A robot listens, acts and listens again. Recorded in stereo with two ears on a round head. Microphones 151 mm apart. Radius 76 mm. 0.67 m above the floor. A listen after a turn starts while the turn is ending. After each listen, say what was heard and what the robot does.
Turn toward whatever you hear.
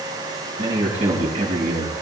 The man speaking: about 45° right or 135° right. Turn 45° right.
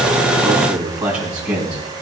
So it is at 10° right. Turn 10° right.
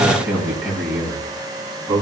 The man speaking is now 10° right. Turn 10° right.
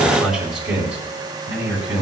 The man speaking is now 10° right. Turn 10° right.
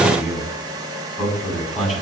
Found it: a man speaking, straight ahead, over 4 m away.